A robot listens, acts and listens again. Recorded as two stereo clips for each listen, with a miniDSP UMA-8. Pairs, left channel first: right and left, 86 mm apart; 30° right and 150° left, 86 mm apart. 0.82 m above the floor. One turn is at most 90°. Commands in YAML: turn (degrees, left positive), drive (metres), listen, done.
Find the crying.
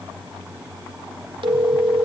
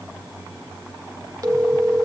listen: true
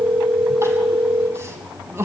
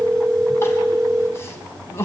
turn: 30
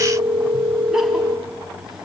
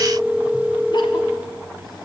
listen: true
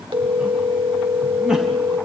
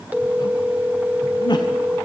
done: "Facing the crying."